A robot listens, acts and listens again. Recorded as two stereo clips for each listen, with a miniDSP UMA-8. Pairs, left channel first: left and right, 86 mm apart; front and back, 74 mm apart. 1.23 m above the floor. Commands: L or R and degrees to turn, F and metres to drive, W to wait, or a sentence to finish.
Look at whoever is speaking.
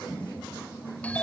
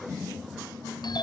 W
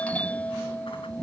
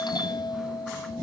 W
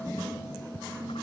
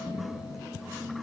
I can't make out anyone speaking, only a doorbell.